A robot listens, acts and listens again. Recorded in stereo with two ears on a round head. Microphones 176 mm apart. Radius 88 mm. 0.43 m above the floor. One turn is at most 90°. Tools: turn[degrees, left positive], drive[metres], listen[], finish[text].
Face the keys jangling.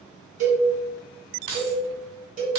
Thought: The keys jangling: about 60° right or 120° right.
Action: turn[-60]
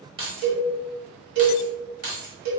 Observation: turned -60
Thought: So it is at 50° right.
Action: turn[-50]
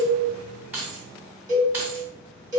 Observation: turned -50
Thought: The keys jangling is now 15° right.
Action: turn[-15]
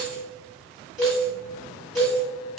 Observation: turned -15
Action: listen[]
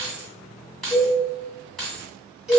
Action: finish[Facing the keys jangling.]